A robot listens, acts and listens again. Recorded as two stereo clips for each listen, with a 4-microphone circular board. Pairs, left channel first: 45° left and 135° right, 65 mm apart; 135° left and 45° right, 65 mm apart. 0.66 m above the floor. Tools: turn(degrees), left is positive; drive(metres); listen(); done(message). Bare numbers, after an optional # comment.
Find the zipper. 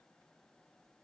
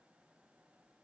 listen()
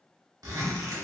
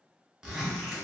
# The zipper: 125° right.
turn(-125)
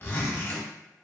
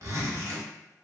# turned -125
# The zipper is now 10° right.
turn(-10)
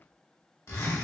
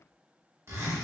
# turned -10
done("Facing the zipper, under 1 m away.")